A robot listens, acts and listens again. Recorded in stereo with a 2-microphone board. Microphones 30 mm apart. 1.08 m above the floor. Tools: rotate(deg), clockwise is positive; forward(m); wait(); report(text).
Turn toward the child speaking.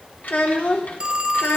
rotate(-90)
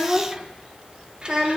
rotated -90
rotate(35)
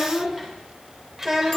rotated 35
rotate(15)
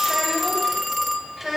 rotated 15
report("Found it: a child speaking, straight ahead, 2 to 4 m away.")